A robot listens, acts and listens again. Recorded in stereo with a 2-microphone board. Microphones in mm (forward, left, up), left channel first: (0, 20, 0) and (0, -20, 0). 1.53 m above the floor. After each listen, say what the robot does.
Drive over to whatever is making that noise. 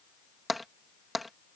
Turn 30° left.
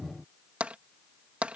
Turn 35° right.
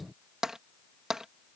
Turn 15° right.
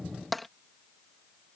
Drive 1.0 m forward.
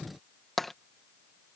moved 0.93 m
Drive 1.0 m forward.
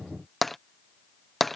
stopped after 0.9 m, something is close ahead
Arrived at the tapping, straight ahead.